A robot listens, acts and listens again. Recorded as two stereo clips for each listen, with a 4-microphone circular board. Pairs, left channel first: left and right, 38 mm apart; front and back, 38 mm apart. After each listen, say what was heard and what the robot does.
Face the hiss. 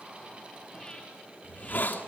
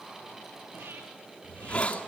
The hiss: 55° left. Turn 55° left.
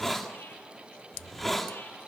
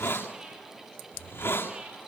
Found it: a hiss, straight ahead.